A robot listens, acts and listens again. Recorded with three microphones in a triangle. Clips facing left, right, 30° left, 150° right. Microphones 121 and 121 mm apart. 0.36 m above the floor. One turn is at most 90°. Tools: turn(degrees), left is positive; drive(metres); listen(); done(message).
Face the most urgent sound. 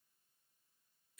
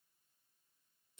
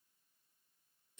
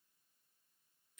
listen()
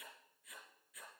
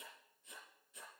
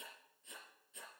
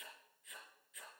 listen()
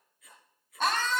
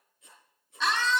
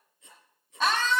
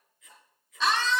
turn(degrees=60)
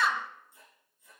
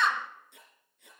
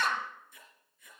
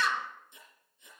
done("Found it: a scream, straight ahead.")